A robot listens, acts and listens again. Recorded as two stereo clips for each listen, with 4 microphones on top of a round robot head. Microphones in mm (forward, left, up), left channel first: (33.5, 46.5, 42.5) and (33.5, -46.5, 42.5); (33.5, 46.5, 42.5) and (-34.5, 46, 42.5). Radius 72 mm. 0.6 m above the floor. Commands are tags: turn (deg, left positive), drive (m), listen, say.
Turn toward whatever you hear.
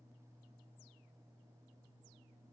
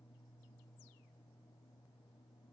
<listen/>
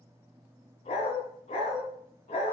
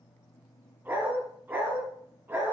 <turn deg="120"/>
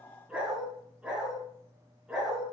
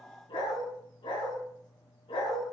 <turn deg="-10"/>
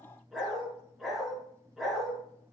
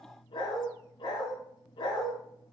<say>Facing the dog barking, 2 to 4 m away.</say>